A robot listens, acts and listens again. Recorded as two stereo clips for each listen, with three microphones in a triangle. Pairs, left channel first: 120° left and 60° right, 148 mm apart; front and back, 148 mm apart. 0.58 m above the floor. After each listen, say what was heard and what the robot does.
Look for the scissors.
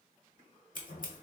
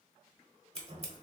The scissors: 135° left. Turn 135° left.
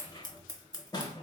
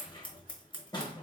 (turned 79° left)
The scissors is now 55° left. Turn 55° left.
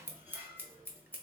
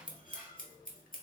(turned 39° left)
The scissors is now 20° left. Turn 20° left.
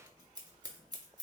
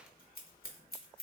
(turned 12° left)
Facing the scissors.